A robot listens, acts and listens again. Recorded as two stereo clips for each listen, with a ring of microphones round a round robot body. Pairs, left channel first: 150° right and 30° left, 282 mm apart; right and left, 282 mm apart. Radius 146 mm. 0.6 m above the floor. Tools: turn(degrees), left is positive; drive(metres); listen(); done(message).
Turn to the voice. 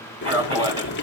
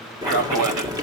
turn(degrees=100)
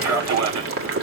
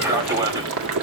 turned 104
turn(degrees=15)
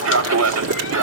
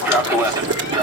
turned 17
turn(degrees=20)
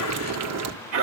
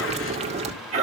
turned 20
turn(degrees=30)
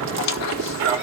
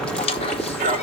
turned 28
turn(degrees=25)
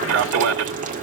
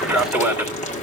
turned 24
done("Facing the man speaking.")